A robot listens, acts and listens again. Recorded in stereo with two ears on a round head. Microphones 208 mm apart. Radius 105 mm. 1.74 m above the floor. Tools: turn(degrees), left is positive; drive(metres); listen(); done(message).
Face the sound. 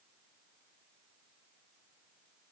listen()
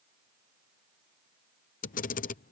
turn(degrees=35)
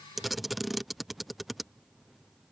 done("Found it: a camera shutter, straight ahead.")